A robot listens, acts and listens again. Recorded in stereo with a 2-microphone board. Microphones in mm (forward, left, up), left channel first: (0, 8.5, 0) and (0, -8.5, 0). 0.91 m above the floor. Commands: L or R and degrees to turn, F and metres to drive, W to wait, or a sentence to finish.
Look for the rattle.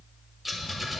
L30
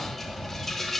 L155
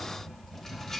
L30
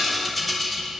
Found it: a rattle, straight ahead, 1 to 2 m away.